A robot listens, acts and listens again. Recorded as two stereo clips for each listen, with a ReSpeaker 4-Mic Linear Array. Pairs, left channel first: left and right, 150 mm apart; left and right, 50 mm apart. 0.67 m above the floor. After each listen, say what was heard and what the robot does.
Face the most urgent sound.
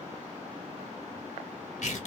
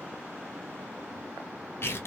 Keep listening.
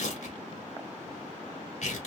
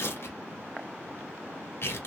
Keep listening.
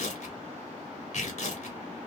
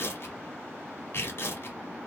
I can't make out anything urgent, only tearing paper.